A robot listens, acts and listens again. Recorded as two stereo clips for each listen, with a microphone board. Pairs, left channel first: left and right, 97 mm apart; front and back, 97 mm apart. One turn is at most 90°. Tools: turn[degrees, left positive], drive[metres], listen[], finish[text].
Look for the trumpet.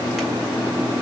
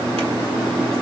Action: listen[]
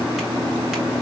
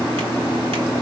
Action: listen[]
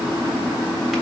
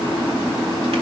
Action: finish[I can't make out a trumpet to turn to.]